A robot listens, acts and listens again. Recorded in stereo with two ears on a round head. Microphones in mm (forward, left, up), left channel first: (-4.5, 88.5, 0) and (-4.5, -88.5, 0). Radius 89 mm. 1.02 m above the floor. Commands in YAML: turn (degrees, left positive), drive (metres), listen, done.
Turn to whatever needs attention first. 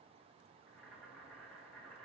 listen: true
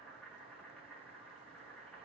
listen: true
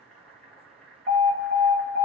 turn: -40
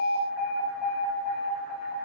done: "Facing the alarm."